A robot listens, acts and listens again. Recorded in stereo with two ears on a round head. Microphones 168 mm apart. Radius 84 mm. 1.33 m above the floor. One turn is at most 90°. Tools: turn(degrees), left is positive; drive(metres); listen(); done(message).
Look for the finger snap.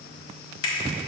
turn(degrees=90)
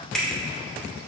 done("Facing the finger snap.")